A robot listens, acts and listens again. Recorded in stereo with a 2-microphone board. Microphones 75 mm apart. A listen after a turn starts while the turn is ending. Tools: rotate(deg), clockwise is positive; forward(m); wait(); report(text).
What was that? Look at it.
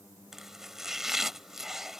rotate(30)
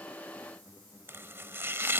rotate(145)
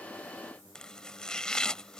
rotate(-10)
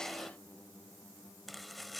report("Facing the chopping.")